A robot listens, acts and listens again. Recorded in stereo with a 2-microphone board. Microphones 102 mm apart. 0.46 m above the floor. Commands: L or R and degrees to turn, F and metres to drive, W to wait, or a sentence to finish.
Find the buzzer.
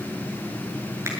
W
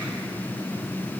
W
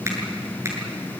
I can't make out a buzzer to turn to.